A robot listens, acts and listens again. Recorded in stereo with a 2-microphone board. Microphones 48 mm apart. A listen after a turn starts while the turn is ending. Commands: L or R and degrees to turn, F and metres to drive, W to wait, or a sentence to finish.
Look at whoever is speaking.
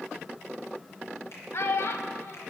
L65
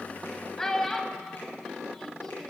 L10
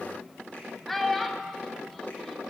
Found it: a child speaking, straight ahead, 1 to 2 m away.